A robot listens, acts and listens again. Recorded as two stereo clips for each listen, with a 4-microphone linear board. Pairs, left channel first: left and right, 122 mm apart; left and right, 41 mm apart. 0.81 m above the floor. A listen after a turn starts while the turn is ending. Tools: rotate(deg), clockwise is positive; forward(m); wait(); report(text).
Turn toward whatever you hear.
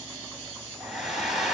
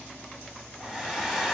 rotate(30)
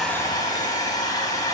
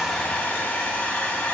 rotate(-30)
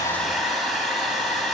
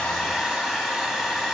report("Facing the hair dryer.")